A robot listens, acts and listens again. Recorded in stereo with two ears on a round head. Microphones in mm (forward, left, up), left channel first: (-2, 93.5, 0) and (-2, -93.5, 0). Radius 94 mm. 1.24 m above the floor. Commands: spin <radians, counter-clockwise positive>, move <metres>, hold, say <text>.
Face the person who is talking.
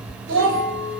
spin -1.05
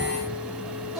hold
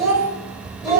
say Found it: a child speaking, straight ahead.